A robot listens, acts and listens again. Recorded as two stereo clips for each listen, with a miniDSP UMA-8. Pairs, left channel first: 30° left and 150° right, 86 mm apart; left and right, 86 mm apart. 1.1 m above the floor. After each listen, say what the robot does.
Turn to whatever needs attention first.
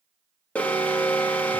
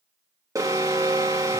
Turn 45° right.
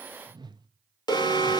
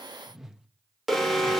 Found it: an alarm, straight ahead.